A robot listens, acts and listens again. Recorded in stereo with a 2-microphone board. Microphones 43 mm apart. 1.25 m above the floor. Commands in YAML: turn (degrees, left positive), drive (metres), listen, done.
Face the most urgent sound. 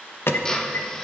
turn: 65
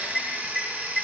done: "Found it: an alarm, straight ahead, 1 to 2 m away."